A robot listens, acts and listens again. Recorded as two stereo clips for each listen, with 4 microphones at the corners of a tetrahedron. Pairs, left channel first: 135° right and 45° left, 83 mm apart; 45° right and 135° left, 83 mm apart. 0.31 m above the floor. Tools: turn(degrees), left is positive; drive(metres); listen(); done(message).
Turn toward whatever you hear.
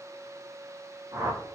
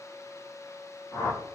done("Found it: a whoosh, straight ahead, 2 to 4 m away.")